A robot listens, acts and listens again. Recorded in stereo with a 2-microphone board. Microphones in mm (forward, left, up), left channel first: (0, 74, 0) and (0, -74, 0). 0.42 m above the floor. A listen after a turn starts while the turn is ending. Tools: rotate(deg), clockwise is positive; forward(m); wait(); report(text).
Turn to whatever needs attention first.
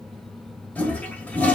wait()
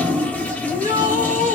rotate(-60)
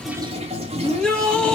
report("Facing the shout, 2 to 4 m away.")